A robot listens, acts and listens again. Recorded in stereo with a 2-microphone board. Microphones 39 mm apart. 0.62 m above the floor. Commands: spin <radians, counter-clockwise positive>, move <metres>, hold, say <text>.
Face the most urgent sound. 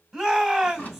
spin 0.52
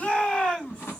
spin 2.53
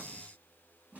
hold
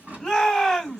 say Found it: a shout, straight ahead, 2 to 4 m away.